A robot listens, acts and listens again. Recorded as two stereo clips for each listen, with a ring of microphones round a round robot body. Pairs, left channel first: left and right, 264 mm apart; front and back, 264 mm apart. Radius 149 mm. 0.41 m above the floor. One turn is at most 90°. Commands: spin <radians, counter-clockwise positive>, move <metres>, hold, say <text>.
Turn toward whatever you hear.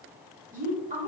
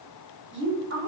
spin -1.57
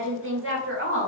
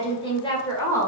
spin -1.40
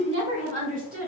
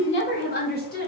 spin -0.79
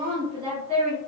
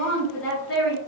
spin -0.52
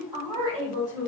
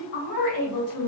spin -0.26
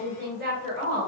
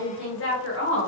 say Facing the woman speaking.